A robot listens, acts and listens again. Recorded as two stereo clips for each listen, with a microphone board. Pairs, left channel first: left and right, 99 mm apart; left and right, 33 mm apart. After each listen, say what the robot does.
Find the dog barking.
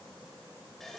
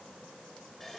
Keep listening.
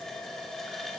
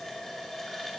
Keep listening.
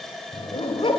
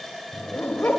Turn 70° left.
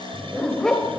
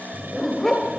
Facing the dog barking, 2 to 4 m away.